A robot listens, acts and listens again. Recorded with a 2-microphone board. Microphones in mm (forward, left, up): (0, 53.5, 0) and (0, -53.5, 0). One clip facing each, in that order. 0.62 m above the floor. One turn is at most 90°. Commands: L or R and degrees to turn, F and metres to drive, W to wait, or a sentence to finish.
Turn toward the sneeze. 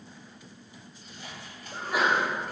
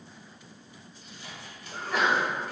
L30
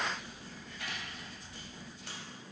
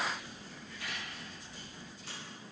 W
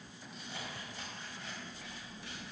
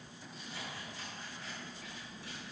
I heard a sneeze, but can't make it out now. It was about 20° right or 140° left.